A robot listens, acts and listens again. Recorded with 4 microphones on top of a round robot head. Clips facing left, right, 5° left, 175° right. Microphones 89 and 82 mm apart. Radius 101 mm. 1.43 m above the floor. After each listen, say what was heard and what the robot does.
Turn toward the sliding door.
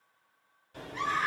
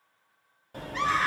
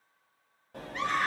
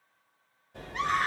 The sliding door: 45° right. Turn 45° right.
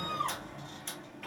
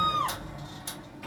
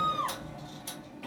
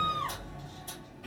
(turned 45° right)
The sliding door is now 10° right. Turn 10° right.
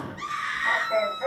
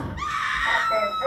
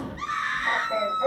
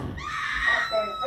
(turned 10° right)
Found it: a sliding door, straight ahead, under 1 m away.